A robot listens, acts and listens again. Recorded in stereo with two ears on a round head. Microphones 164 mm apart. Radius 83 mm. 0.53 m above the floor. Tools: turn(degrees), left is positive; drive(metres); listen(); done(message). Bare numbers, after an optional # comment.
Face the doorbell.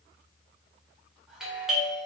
turn(-30)
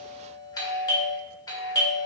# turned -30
# So it is at 25° left.
turn(25)
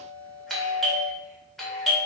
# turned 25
done("Found it: a doorbell, straight ahead.")